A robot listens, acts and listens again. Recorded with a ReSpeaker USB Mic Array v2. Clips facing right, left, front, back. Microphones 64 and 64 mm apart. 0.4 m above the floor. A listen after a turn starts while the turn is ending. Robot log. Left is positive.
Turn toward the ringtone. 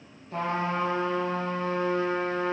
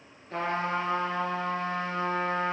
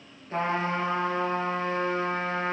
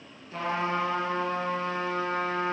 cmd idle
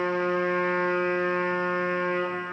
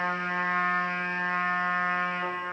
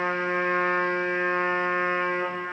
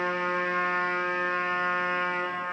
cmd idle
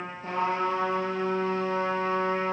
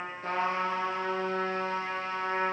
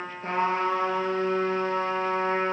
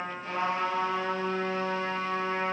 end: I can't make out a ringtone, only a trumpet.